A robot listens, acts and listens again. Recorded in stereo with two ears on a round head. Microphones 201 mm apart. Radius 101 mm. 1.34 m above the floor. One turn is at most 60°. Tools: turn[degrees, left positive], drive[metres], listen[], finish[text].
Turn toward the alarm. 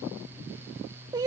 Action: listen[]
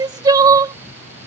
Action: listen[]
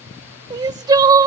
Action: finish[I can't make out an alarm to turn to.]